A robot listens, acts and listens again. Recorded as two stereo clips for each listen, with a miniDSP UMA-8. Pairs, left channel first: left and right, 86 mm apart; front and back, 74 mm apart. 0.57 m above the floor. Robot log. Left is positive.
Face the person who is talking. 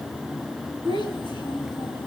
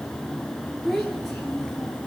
note: The child speaking: 85° right.
cmd yaw -85
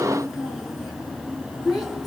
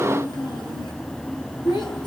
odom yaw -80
end: Found it: a child speaking, straight ahead, over 4 m away.